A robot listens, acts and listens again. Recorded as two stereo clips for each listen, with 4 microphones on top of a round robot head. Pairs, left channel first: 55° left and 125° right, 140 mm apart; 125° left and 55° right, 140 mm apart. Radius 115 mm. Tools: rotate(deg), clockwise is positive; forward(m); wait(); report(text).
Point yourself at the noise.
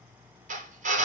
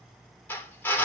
rotate(155)
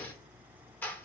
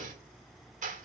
rotate(20)
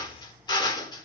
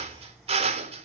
report("Found it: a drill, straight ahead, 2 to 4 m away.")